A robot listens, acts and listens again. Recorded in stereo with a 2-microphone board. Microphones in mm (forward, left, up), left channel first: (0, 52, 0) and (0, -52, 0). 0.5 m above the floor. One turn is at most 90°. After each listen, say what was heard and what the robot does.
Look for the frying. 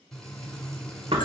Turn 30° left.
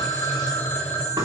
Keep listening.
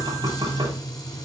So it is at 140° left. Turn 90° left.
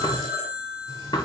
Nothing new. It was at 50° left. Turn 50° left.
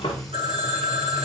Found it: frying, straight ahead, 1 to 2 m away.